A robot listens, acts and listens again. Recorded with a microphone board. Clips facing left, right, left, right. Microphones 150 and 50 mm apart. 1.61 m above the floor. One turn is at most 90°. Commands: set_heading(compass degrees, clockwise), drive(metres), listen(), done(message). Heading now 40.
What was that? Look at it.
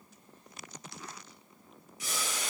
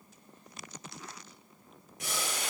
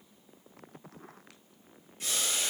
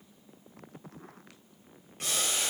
set_heading(100)
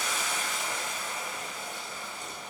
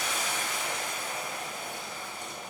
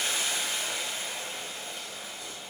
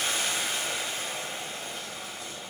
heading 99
set_heading(159)
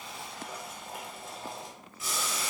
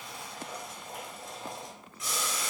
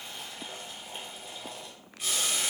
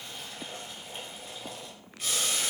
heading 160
done("Found it: boiling, straight ahead.")